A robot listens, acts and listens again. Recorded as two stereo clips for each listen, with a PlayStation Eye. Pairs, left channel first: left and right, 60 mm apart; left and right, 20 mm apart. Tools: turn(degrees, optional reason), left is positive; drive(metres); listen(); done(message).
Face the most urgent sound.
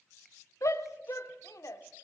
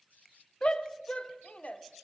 turn(degrees=60, reason="The shout: about 60° left or 120° left.")
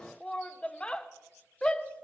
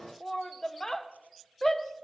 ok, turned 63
turn(degrees=20, reason="So it is at 20° left.")
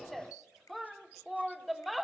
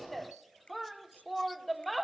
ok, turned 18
done("Found it: a shout, straight ahead, 1 to 2 m away.")